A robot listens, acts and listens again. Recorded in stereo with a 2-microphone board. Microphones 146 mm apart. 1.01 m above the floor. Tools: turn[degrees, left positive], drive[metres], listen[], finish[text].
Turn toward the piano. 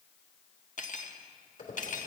Action: listen[]
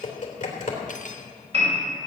Thought: The piano: about 45° right or 135° right.
Action: turn[-45]
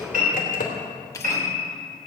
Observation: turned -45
Thought: So it is at 90° right.
Action: turn[-90]
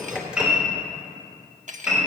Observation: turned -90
Action: finish[Found it: a piano, straight ahead.]